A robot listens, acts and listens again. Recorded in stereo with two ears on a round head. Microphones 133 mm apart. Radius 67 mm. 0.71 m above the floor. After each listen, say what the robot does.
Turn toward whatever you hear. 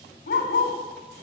Turn 65° left.
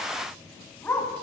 Turn 10° left.
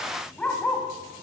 Turn 10° left.
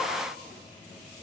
Keep listening.
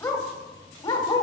Turn 25° left.
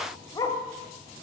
Turn 25° left.
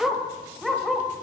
Found it: a dog barking, straight ahead.